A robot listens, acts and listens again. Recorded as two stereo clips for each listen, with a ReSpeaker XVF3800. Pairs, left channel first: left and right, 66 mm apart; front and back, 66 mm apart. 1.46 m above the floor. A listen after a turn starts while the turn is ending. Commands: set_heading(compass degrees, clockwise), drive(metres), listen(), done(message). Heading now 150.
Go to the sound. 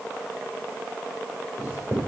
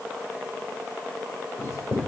set_heading(180)
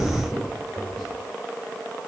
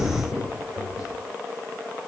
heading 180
drive(1.0)
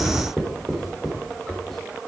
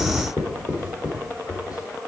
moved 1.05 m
drive(1.0)
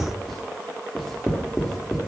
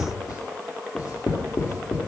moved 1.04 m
drive(1.0)
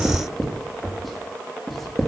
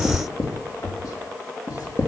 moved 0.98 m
drive(1.0)
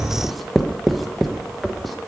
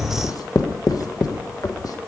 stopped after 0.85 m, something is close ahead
done("Arrived at the writing, straight ahead.")